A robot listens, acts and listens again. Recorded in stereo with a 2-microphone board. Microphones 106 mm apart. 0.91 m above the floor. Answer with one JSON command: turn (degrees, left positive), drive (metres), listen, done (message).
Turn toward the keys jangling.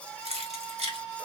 {"turn": -90}
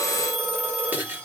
{"turn": -20}
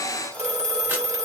{"listen": true}
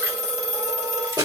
{"turn": -35}
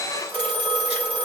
{"listen": true}
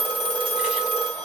{"listen": true}
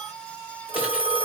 {"done": "I heard keys jangling from this way, but can't make it out now."}